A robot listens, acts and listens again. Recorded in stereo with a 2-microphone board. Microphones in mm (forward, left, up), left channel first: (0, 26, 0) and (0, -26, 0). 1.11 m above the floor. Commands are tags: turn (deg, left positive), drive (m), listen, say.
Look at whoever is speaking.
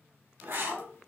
<turn deg="30"/>
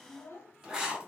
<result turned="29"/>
<turn deg="120"/>
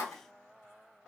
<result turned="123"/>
<listen/>
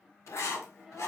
<say>Found it: a child speaking, straight ahead, under 1 m away.</say>